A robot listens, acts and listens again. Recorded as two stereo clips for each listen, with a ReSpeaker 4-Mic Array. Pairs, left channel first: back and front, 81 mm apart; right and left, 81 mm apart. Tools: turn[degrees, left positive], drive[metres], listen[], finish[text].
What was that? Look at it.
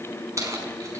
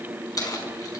Thought: The keys jangling: 50° right.
Action: turn[-50]
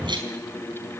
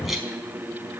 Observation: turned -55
Action: finish[Found it: keys jangling, straight ahead, over 4 m away.]